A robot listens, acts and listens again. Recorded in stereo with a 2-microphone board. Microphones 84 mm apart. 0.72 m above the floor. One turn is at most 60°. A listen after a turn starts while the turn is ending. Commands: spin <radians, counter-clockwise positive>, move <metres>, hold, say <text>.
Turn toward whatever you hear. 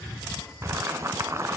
spin -0.61
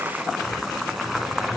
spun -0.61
say Facing the boiling.